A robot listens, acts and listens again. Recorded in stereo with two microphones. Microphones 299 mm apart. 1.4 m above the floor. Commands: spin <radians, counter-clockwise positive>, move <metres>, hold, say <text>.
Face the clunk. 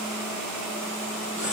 hold
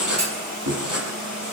spin -1.05
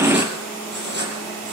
hold
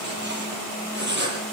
say I heard a clunk, but can't make it out now. It was about straight ahead or 60° right.